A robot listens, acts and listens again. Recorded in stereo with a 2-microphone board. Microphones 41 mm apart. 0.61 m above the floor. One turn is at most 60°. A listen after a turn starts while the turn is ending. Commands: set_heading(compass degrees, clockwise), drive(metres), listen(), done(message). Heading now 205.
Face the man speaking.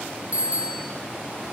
listen()
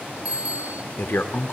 set_heading(145)
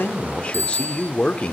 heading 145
set_heading(115)
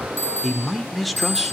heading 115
done("Found it: a man speaking, straight ahead, 1 to 2 m away.")